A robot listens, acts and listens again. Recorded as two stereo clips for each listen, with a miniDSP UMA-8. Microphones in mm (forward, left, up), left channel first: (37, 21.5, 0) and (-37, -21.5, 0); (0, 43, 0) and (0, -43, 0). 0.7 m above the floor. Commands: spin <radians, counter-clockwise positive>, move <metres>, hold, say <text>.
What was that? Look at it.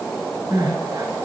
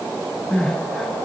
spin 2.97
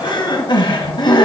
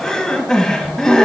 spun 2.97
say Found it: crying, straight ahead.